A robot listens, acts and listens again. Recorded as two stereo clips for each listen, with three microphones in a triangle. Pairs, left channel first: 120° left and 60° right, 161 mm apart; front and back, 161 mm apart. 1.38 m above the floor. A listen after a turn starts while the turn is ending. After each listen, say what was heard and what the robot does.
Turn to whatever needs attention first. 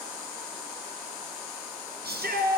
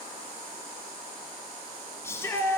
The shout: 75° right. Turn 75° right.
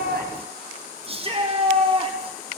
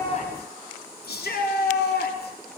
Found it: a shout, straight ahead.